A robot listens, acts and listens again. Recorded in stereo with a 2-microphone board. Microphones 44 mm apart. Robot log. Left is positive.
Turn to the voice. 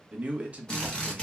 note: The man speaking: about 30° right or 150° right.
cmd yaw -30
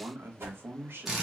note: So it is at 115° right.
cmd yaw -115
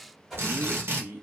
note: The man speaking is now 50° right.
cmd yaw -50
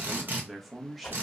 end: Facing the man speaking, under 1 m away.